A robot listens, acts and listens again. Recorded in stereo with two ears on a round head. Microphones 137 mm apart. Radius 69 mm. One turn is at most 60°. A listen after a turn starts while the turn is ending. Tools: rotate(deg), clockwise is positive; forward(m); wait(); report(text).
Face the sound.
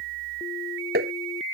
rotate(60)
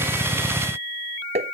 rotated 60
rotate(40)
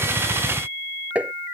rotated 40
rotate(10)
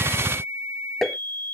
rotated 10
report("Facing the tapping.")